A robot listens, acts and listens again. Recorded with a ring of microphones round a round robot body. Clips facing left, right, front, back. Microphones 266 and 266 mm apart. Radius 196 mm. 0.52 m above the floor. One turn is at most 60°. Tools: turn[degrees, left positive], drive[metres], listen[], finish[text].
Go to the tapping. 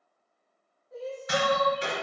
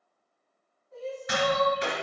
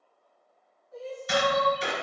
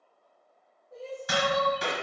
Thought: The tapping: 160° right.
Action: turn[-60]
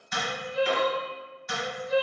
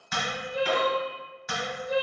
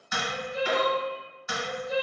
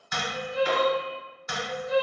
Thought: The tapping is now 80° right.
Action: turn[-60]
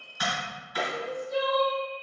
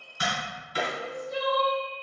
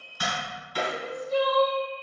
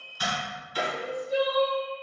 Thought: The tapping is now 25° right.
Action: turn[-25]
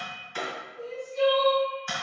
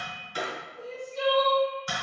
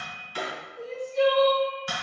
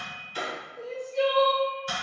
Thought: The tapping is now 20° right.
Action: turn[-20]
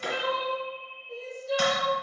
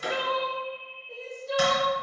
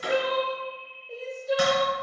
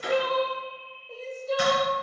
Thought: The tapping is now 10° right.
Action: turn[-10]
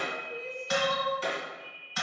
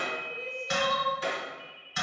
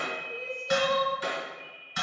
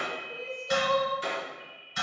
Action: drive[1.0]
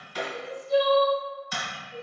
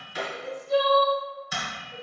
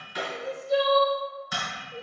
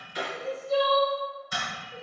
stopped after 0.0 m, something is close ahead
Action: finish[Blocked. The tapping is further on, straight ahead.]